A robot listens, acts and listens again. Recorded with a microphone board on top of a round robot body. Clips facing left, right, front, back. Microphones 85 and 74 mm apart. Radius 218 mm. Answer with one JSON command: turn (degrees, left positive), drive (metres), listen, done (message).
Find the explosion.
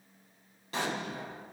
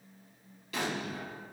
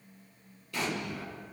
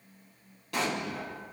{"turn": 150}
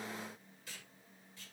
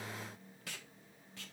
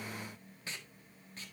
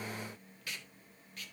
{"done": "I heard an explosion from this way, but can't make it out now."}